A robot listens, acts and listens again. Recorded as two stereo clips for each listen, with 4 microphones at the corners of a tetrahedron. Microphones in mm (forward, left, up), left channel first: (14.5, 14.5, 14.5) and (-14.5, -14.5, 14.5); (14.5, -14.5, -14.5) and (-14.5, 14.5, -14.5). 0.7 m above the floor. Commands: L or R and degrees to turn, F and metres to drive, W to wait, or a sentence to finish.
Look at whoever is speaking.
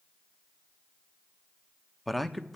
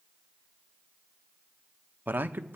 L135
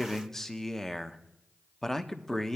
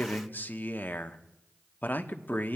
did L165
R30
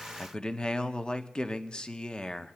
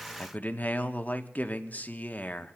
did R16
R15
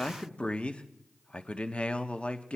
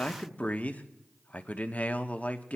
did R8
Found it: a man speaking, straight ahead, under 1 m away.